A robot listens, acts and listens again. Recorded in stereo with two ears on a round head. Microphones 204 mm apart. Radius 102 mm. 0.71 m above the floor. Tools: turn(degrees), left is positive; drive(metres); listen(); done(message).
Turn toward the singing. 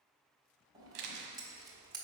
listen()
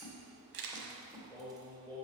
turn(degrees=30)
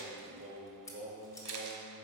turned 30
turn(degrees=-55)
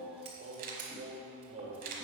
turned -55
turn(degrees=-30)
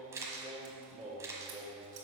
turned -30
done("Found it: singing, straight ahead, 1 to 2 m away.")